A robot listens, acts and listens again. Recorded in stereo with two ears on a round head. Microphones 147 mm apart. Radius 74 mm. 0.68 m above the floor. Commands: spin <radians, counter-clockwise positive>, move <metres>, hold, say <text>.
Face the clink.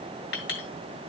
spin 1.57
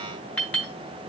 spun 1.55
spin 0.17
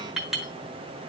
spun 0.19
say Found it: a clink, straight ahead, 2 to 4 m away.